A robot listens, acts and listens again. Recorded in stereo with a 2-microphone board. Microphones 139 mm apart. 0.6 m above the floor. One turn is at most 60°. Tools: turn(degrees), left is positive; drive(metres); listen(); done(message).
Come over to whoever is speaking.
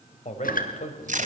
turn(degrees=55)
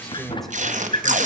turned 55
drive(metres=1.0)
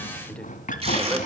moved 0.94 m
listen()
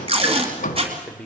turn(degrees=10)
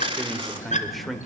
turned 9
drive(metres=1.0)
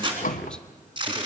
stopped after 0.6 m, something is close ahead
listen()
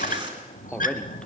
done("Arrived at the man speaking, straight ahead.")